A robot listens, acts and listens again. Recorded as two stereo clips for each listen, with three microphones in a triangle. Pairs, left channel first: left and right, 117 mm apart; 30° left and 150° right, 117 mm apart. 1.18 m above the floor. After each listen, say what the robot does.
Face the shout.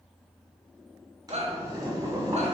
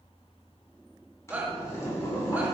Turn 75° right.
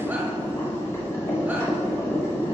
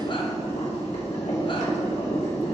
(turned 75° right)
Keep listening.
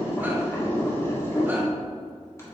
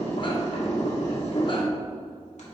Keep listening.
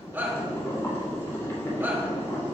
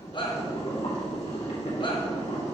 Turn 15° right.
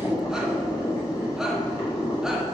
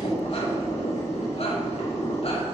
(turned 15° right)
Keep listening.
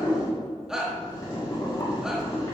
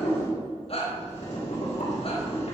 Found it: a shout, straight ahead, 1 to 2 m away.